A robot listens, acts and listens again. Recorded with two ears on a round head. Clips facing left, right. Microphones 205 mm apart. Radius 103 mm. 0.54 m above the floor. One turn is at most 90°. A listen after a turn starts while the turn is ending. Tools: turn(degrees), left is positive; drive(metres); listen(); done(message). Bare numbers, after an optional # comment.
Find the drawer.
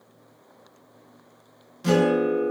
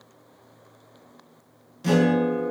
listen()
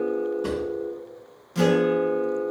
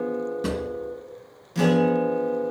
# The drawer: about 30° right or 150° right.
turn(-30)
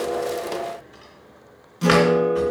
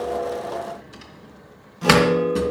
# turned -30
# So it is at 120° right.
turn(-90)
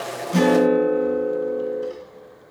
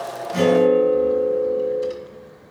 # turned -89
# Nothing new. It was at 30° right.
turn(-30)
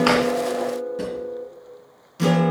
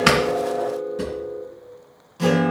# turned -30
done("Facing the drawer.")